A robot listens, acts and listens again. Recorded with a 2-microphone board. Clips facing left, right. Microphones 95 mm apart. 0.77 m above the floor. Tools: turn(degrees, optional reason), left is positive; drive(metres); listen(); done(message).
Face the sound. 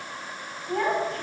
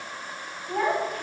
turn(degrees=-30)
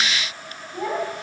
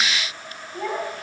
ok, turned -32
turn(degrees=15, reason="So it is at 15° left.")
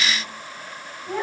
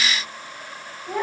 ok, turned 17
turn(degrees=-10, reason="The child speaking is now 10° right.")
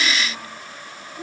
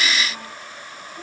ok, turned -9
done("Found it: a child speaking, straight ahead.")